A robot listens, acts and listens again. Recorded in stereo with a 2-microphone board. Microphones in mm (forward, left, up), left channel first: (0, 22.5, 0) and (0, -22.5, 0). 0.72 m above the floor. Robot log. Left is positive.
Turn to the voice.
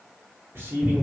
note: The man speaking: about 70° right or 110° right.
cmd yaw -70
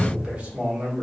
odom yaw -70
note: So it is at 30° right.
cmd yaw -30
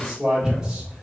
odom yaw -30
note: The man speaking is now 15° right.
cmd yaw -15
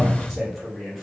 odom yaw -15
end: Facing the man speaking, 1 to 2 m away.